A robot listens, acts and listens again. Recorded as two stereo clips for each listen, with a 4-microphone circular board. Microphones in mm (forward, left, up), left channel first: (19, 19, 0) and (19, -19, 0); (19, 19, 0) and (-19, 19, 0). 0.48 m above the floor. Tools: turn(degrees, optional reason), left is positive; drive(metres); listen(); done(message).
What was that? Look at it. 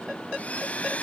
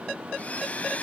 turn(degrees=45, reason="The blender: 45° left.")
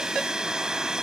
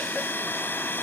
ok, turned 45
turn(degrees=-15, reason="The blender is now 15° right.")
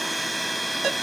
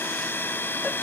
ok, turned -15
done("Found it: a blender, straight ahead.")